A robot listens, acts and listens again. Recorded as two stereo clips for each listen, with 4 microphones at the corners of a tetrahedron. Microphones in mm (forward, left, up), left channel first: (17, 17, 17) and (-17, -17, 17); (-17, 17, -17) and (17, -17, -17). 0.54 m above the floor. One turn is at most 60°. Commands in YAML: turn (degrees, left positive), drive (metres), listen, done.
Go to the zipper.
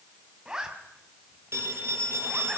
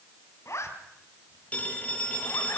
turn: 60
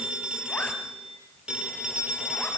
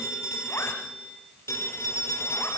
turn: 60
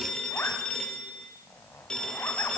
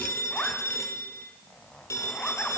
turn: 60
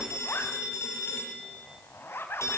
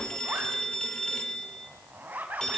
drive: 1.0
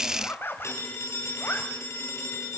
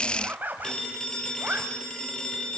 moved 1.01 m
drive: 1.0
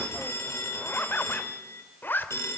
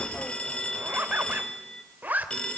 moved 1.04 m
drive: 1.0
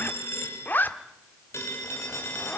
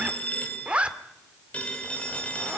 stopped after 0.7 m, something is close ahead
turn: 10
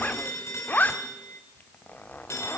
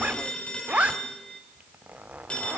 done: "Arrived at the zipper, straight ahead."